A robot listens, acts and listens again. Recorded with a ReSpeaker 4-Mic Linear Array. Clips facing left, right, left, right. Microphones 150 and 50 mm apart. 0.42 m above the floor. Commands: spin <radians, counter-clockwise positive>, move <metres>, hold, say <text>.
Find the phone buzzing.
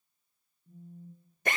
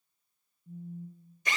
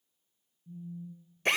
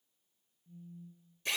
spin -0.52
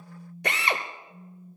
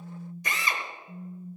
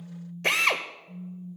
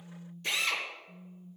spin -2.53
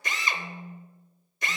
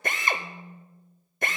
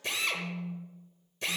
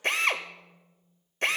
say Facing the phone buzzing.